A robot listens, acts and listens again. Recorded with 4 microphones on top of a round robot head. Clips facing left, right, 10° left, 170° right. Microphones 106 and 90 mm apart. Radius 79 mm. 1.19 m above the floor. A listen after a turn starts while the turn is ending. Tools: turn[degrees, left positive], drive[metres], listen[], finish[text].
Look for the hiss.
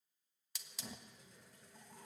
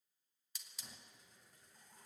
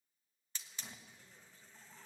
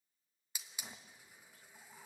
Thought: The hiss: 110° left.
Action: turn[110]
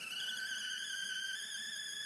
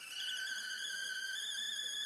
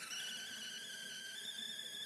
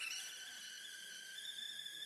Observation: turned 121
Thought: The hiss is now 10° right.
Action: turn[-10]
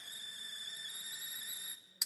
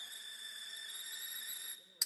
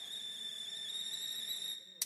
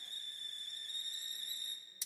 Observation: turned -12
Action: finish[Found it: a hiss, straight ahead.]